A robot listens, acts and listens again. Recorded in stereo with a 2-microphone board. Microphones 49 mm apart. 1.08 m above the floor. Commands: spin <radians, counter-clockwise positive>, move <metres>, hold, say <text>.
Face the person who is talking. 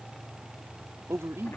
spin -1.57
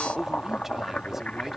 say Facing the man speaking.